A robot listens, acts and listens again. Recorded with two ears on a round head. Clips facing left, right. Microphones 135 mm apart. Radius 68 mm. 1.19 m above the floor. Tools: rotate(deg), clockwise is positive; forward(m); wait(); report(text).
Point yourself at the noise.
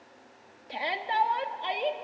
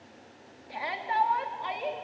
rotate(-35)
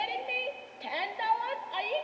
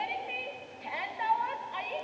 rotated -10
rotate(-40)
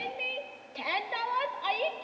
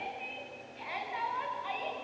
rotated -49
rotate(-90)
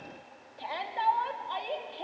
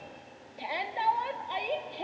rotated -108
rotate(20)
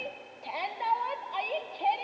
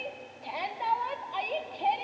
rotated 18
report("Found it: a shout, straight ahead.")